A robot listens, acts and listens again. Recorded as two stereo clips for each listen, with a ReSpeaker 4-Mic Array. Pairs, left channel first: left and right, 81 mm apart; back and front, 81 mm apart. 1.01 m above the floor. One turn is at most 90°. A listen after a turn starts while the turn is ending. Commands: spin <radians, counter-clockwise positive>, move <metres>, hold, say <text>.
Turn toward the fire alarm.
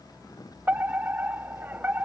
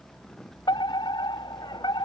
spin -1.57
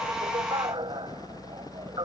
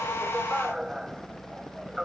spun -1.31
spin -1.40
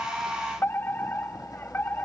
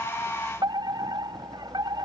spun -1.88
spin 0.44
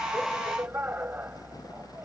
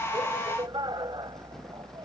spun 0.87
spin -0.44
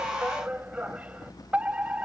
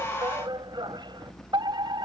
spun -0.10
spin -0.26
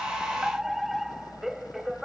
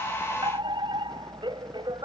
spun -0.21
say Found it: a fire alarm, straight ahead.